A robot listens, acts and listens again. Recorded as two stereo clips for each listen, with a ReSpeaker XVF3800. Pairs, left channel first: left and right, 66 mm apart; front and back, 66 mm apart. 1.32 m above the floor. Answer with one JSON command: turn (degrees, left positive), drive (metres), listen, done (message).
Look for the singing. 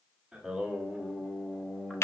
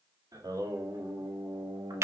{"turn": 175}
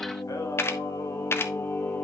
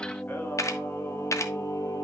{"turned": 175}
{"turn": 30}
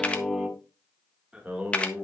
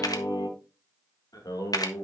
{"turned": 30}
{"turn": -25}
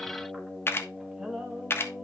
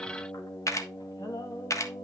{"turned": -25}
{"turn": -10}
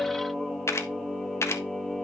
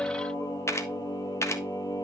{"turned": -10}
{"done": "Found it: singing, straight ahead, 2 to 4 m away."}